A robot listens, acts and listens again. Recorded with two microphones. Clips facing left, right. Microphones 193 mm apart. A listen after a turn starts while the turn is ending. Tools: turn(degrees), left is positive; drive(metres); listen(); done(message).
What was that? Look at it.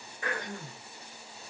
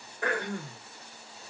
turn(degrees=-65)
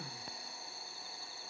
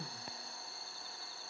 listen()
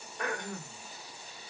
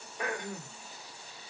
done("Found it: throat clearing, straight ahead, 1 to 2 m away.")